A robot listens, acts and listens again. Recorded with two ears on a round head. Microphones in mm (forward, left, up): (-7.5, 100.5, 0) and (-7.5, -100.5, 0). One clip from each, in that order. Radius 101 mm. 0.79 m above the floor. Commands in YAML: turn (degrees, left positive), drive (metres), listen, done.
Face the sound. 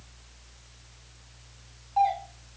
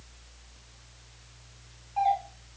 turn: 30
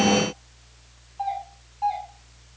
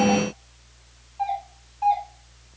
done: "Found it: a doorbell, straight ahead."